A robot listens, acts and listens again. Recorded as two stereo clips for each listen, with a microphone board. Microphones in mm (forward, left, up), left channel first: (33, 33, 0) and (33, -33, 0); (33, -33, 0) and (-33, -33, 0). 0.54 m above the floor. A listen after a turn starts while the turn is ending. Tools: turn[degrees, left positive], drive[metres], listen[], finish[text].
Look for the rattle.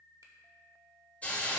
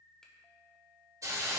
Action: listen[]
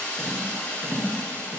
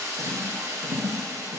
Thought: The rattle: 155° right.
Action: turn[-155]
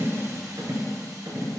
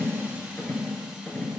Thought: The rattle is now 55° right.
Action: turn[-55]
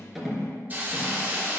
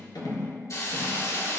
Action: listen[]
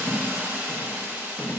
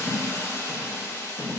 Thought: The rattle is now 20° left.
Action: turn[20]
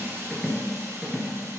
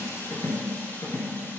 Action: finish[Facing the rattle.]